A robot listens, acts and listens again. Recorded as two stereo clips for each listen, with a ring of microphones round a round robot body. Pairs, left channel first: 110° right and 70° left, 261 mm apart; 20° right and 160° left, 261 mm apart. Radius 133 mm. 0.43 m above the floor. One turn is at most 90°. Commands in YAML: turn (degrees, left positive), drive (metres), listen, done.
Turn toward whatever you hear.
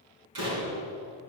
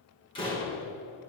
turn: 50
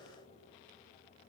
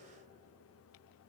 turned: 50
done: "I heard a door slam from this way, but can't make it out now."